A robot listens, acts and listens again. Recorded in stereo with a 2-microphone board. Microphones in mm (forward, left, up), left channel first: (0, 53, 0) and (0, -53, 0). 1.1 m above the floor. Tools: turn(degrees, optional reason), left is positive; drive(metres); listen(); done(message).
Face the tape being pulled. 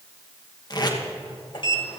turn(degrees=40, reason="The tape being pulled: about 40° left or 140° left.")
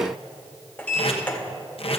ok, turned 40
turn(degrees=95, reason="So it is at 95° left.")
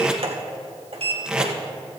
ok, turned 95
turn(degrees=-10, reason="The tape being pulled is now 10° right.")
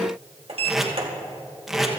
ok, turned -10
done("Facing the tape being pulled.")